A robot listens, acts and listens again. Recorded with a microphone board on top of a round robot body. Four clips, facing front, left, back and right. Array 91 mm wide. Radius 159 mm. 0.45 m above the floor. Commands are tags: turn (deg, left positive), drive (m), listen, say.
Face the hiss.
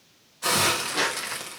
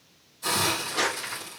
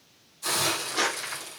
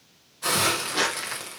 <turn deg="-35"/>
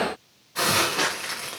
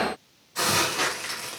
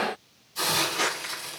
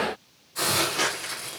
<turn deg="15"/>
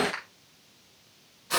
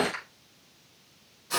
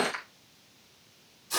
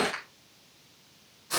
<say>Found it: a hiss, straight ahead, 2 to 4 m away.</say>